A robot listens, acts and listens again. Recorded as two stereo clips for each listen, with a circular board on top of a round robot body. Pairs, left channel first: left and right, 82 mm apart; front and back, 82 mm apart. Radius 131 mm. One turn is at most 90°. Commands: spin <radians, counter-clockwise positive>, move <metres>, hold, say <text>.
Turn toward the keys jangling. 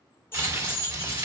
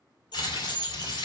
spin 0.44
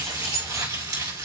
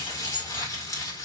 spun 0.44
hold
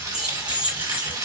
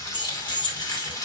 spin -0.26
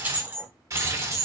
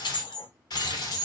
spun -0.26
spin -0.61
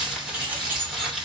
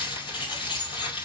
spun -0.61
hold
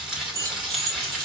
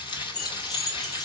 spin -0.61
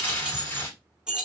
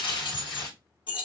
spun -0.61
spin -0.17
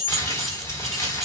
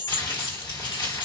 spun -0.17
say Found it: keys jangling, straight ahead.